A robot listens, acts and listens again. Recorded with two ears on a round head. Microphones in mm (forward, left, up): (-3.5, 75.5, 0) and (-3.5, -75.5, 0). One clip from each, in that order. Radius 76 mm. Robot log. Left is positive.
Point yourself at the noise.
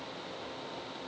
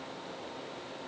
cmd idle
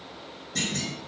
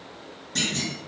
note: The clunk: about 20° right or 160° right.
cmd yaw -20
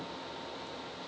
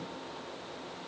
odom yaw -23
cmd idle
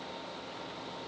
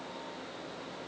end: I heard a clunk, but can't make it out now. It was about 5° left or 140° right.